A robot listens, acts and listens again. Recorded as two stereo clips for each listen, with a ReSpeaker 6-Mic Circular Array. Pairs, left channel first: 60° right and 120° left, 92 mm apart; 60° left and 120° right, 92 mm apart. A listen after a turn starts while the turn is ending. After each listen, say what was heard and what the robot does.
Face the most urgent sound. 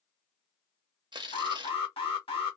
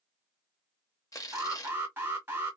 The alarm: 55° right. Turn 55° right.
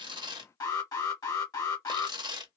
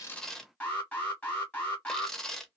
The alarm is now 15° right. Turn 15° right.
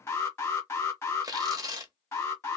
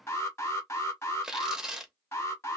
Found it: an alarm, straight ahead.